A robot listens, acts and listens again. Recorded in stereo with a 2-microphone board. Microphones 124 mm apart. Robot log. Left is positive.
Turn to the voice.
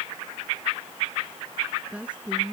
cmd yaw -30
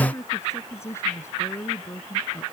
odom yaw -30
note: So it is at 20° left.
cmd yaw +20
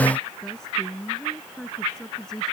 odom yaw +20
end: Found it: a woman speaking, straight ahead.